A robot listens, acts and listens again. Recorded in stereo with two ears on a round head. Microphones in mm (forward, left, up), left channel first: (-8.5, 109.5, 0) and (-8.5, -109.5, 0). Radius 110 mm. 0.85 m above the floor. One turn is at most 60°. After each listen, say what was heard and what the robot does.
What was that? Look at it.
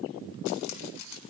Turn 60° left.
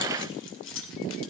So it is at 55° left. Turn 55° left.
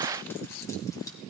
Keep listening.
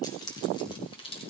The keys jangling is now 20° left. Turn 20° left.
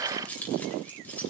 Facing the keys jangling.